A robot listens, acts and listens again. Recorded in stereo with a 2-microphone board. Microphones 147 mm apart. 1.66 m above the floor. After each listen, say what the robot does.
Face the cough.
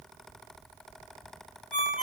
Keep listening.
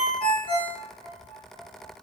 Keep listening.
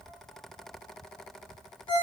I can't make out a cough to turn to.